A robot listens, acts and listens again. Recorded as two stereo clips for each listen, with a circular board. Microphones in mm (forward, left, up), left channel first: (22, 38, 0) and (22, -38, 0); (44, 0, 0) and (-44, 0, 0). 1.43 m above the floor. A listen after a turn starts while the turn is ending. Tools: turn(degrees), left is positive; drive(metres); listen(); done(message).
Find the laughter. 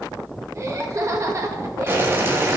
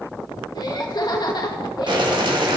turn(degrees=-40)
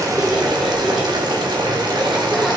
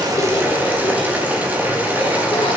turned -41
listen()
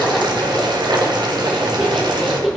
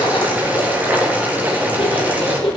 done("Found it: laughter, straight ahead.")